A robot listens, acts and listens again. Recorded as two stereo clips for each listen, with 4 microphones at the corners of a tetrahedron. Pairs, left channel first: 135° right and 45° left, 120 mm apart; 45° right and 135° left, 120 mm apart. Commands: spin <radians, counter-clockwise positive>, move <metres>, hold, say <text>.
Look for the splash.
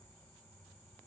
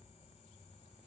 hold
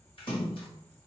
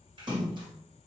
spin -3.05
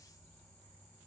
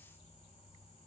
say Facing where the splash came from. I can't hear it now.